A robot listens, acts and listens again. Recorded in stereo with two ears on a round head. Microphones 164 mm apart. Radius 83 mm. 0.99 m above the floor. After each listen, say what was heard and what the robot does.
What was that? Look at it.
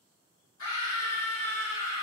Turn 90° left.
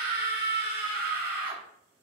So it is at 10° right. Turn 10° right.
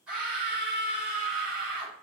Facing the scream.